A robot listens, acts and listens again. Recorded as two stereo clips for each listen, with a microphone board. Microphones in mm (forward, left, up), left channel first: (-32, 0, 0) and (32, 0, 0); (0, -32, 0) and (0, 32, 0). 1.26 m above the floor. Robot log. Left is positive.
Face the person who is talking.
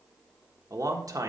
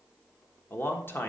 note: The man speaking: 30° right.
cmd yaw -30
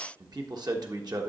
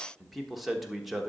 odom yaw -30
end: Found it: a man speaking, straight ahead.